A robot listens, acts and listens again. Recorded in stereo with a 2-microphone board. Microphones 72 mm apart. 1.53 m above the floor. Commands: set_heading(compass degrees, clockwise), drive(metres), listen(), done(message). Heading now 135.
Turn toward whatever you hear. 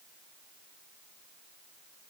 listen()
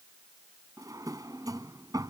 set_heading(195)
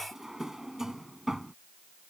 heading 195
done("Found it: a drawer, straight ahead.")